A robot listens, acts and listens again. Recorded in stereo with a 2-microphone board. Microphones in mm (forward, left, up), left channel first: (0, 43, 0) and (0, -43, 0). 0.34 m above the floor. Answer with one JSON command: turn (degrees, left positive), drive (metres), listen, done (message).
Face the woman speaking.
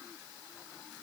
{"listen": true}
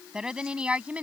{"turn": -15}
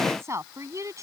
{"turn": -40}
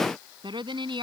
{"turn": -110}
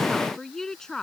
{"done": "Facing the woman speaking."}